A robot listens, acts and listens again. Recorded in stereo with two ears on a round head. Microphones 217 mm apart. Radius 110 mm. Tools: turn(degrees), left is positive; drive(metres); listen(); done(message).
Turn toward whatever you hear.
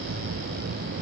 listen()
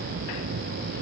listen()
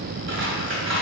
turn(degrees=-50)
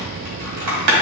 turn(degrees=-80)
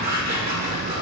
turn(degrees=-40)
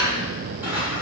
turn(degrees=-10)
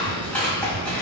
done("Facing the scissors, 2 to 4 m away.")